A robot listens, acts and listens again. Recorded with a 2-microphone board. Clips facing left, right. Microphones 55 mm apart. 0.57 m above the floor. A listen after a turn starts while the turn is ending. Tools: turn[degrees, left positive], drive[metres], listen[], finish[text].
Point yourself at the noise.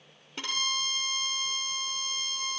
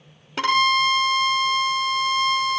Action: turn[-90]
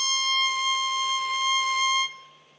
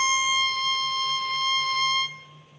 Action: finish[Found it: a violin, straight ahead, under 1 m away.]